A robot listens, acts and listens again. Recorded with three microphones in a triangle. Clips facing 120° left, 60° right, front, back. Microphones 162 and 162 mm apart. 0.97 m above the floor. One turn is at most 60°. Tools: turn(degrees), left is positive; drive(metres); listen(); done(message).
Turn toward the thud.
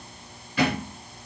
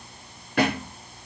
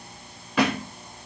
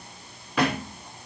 turn(degrees=-60)
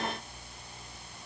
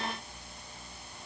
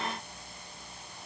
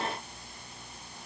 turn(degrees=-30)
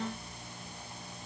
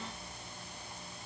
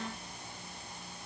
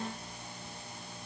done("I heard a thud from this way, but can't make it out now.")